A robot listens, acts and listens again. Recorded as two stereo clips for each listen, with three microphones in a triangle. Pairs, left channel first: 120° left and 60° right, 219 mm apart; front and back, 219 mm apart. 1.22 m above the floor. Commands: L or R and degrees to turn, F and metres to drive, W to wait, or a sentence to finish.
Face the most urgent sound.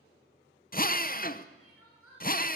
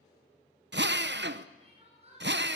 L120
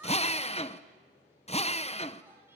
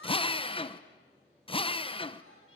W
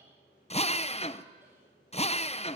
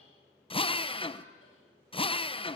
W
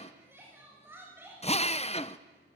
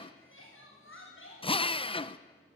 L20
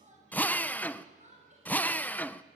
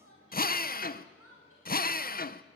Facing the crying.